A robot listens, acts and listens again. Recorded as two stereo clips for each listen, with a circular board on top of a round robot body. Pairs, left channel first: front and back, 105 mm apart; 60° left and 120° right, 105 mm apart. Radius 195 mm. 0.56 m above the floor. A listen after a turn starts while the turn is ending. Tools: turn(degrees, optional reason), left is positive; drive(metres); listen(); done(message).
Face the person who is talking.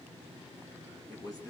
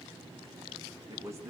turn(degrees=-55, reason="The man speaking: 55° right.")
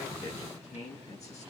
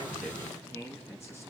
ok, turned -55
done("Facing the man speaking.")